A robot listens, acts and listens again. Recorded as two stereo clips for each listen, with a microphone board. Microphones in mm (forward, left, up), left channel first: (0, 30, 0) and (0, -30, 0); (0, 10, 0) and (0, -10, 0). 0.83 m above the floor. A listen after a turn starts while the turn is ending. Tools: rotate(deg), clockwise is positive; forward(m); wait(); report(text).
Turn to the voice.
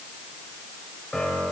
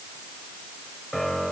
wait()
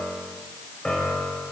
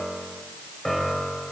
wait()
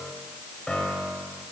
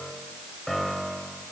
report("I can't make out anyone speaking, only a piano.")